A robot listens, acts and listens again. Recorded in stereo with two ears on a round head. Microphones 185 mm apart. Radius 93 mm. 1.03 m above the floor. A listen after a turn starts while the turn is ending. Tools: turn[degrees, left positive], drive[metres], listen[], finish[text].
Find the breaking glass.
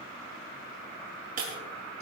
Thought: The breaking glass: about 45° right or 135° right.
Action: turn[-45]
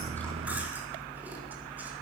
Action: listen[]
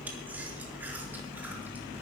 Action: finish[I heard breaking glass, but can't make it out now. It was about straight ahead or 90° right.]